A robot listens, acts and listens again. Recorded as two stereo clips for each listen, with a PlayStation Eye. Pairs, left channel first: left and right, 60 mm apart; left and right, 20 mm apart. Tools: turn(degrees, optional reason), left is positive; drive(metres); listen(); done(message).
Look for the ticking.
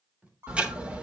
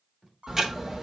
turn(degrees=-20, reason="The ticking: about 20° right or 160° right.")
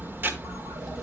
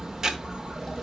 turn(degrees=-140, reason="So it is at 140° right.")
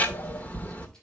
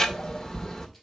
turn(degrees=35, reason="The ticking is now 35° left.")
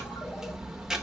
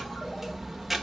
turn(degrees=-10, reason="The ticking is now 10° right.")
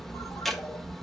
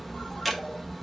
done("Found it: ticking, straight ahead, 1 to 2 m away.")